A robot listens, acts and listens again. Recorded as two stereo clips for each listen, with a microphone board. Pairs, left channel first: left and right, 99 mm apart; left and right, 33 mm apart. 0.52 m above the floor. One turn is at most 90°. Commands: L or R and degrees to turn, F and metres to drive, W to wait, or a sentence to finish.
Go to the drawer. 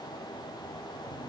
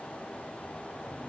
W
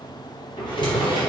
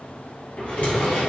L50
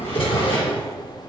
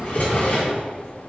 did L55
L75
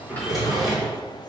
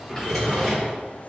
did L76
F1.0
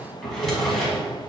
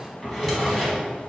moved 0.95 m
F1.0
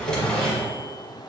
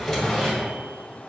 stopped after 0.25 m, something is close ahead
L10
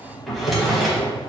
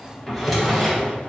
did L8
I am next to the drawer.